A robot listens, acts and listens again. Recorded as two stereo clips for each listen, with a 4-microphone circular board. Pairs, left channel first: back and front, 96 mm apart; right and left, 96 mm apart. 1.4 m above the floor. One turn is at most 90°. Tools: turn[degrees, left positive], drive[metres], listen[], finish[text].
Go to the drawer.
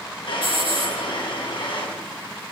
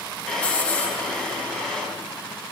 Thought: The drawer: 175° right.
Action: turn[-90]
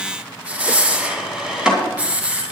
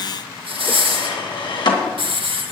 Thought: The drawer is now 80° right.
Action: turn[-80]
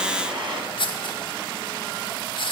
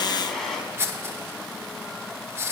Action: drive[1.0]
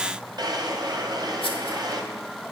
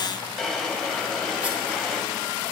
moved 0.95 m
Action: drive[1.0]
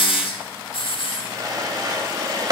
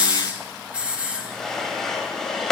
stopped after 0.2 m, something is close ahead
Action: finish[Arrived at the drawer, straight ahead.]